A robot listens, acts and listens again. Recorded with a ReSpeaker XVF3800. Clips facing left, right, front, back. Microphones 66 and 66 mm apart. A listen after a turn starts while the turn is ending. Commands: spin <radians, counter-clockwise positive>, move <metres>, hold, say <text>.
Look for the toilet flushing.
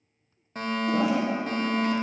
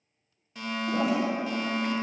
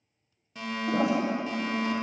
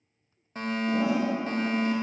say Found it: a toilet flushing, straight ahead, 1 to 2 m away.